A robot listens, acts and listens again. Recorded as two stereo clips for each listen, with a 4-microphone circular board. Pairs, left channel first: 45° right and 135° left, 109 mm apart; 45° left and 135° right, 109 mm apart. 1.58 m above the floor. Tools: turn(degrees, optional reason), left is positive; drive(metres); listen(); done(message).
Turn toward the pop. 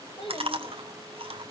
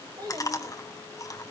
listen()
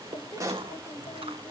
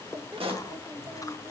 turn(degrees=-165, reason="The pop: 165° right.")
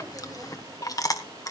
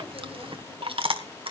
done("Facing where the pop came from. I can't hear it now.")